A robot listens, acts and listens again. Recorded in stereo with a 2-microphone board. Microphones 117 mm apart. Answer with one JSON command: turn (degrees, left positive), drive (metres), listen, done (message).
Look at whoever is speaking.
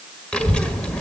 {"turn": 30}
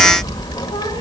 {"turn": 140}
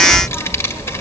{"turn": 25}
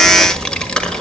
{"turn": 10}
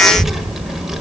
{"done": "Facing the child speaking."}